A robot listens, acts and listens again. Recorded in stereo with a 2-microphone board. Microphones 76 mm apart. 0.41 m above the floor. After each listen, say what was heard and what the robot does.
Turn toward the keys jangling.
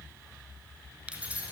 The keys jangling: about 20° right or 160° right. Turn 20° right.
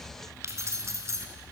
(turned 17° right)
The keys jangling: about 40° right or 140° right. Turn 40° right.
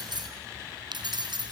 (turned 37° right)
So it is at 100° right. Turn 100° right.
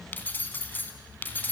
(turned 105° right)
The keys jangling is now 25° left. Turn 25° left.
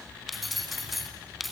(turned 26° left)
Facing the keys jangling, 2 to 4 m away.